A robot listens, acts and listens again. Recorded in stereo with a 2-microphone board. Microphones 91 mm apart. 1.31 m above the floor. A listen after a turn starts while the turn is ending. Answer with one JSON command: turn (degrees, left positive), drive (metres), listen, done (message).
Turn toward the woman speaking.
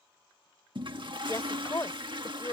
{"turn": 40}
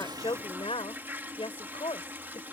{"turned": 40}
{"turn": 105}
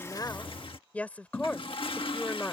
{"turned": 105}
{"turn": 15}
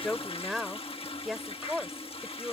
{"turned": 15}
{"done": "Facing the woman speaking."}